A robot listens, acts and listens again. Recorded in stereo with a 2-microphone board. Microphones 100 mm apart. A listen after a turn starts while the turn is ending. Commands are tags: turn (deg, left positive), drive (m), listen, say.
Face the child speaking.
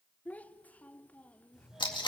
<turn deg="15"/>
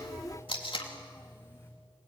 <listen/>
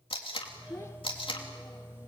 <turn deg="150"/>
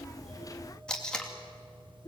<turn deg="45"/>
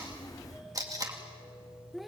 <say>Facing the child speaking, under 1 m away.</say>